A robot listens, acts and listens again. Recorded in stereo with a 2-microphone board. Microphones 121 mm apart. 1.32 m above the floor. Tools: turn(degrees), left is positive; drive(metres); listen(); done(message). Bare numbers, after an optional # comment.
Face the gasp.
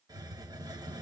listen()
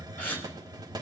# The gasp: about 20° left or 160° left.
turn(20)
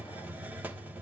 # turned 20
listen()
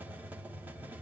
done("I heard a gasp, but can't make it out now. It was about straight ahead or 140° left.")